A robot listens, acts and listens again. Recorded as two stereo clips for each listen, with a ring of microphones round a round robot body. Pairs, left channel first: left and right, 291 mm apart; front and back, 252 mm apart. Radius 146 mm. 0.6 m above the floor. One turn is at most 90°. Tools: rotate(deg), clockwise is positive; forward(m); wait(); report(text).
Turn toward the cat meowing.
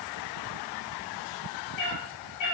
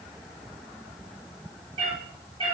rotate(-90)
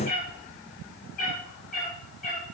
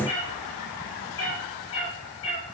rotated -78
rotate(-25)
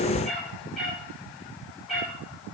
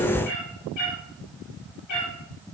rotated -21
report("Facing the cat meowing.")